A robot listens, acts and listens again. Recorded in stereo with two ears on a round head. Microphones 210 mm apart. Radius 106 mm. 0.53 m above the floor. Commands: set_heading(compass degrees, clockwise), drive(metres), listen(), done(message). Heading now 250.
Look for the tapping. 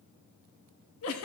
listen()
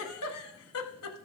listen()
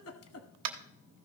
set_heading(340)
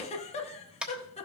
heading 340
done("Found it: tapping, straight ahead, 1 to 2 m away.")